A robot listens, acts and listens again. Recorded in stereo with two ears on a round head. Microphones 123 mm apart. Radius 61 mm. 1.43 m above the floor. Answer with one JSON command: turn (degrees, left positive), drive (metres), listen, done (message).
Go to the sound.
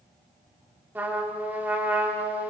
{"turn": -30}
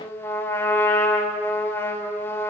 {"turn": 15}
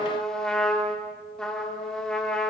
{"drive": 1.0}
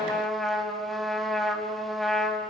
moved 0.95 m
{"drive": 1.0}
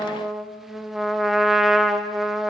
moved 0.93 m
{"drive": 1.0}
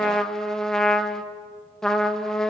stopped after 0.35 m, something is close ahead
{"done": "I am next to the trumpet."}